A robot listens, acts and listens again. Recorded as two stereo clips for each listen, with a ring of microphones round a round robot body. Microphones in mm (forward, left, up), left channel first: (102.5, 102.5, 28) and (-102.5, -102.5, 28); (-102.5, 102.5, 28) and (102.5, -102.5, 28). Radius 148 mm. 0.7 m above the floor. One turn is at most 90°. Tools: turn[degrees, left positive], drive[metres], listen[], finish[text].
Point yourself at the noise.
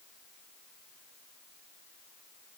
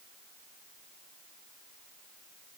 Action: listen[]
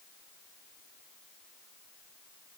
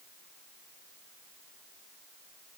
Action: listen[]
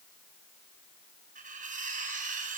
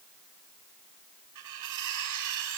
Thought: The cutlery clinking: 70° right.
Action: turn[-70]
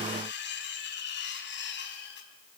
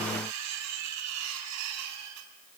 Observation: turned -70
Thought: The cutlery clinking is now 10° right.
Action: turn[-10]
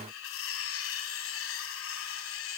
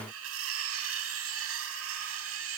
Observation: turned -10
Action: finish[Found it: cutlery clinking, straight ahead, 2 to 4 m away.]